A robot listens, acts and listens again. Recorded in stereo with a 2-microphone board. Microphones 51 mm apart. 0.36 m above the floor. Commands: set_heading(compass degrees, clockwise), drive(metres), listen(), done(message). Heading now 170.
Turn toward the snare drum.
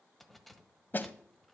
set_heading(130)
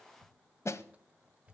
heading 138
set_heading(33)
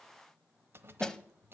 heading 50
set_heading(35)
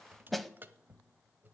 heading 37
done("Facing the snare drum.")